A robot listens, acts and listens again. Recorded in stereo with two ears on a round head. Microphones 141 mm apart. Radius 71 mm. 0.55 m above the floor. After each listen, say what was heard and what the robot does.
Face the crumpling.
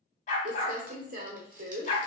The crumpling: about 55° right or 125° right. Turn 55° right.
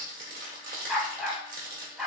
So it is at 60° right. Turn 60° right.
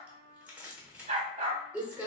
The crumpling is now 10° right. Turn 10° right.
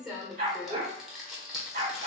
Facing the crumpling, 1 to 2 m away.